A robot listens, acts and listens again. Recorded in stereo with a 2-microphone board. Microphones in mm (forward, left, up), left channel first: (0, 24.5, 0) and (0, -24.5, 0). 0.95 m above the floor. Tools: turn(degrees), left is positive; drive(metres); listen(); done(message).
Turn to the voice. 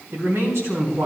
turn(degrees=-90)
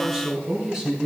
turn(degrees=-10)
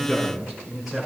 done("Facing the man speaking, over 4 m away.")